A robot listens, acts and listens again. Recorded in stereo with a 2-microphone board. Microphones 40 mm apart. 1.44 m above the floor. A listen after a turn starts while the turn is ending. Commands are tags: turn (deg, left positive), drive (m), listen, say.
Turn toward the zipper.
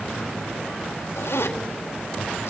<turn deg="90"/>
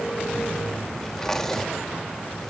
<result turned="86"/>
<turn deg="15"/>
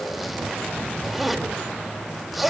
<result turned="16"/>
<say>Facing the zipper.</say>